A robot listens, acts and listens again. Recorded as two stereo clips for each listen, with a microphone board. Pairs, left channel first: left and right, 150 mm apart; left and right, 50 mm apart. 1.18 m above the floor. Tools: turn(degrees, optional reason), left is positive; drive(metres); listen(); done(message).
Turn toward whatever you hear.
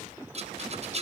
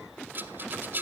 turn(degrees=-45, reason="The rattle: about 45° right or 135° right.")
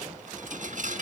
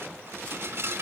turn(degrees=-80, reason="So it is at 80° right.")
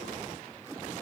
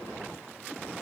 listen()
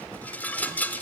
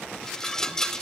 turn(degrees=15, reason="The rattle is now 15° left.")
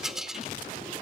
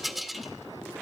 done("Facing the rattle.")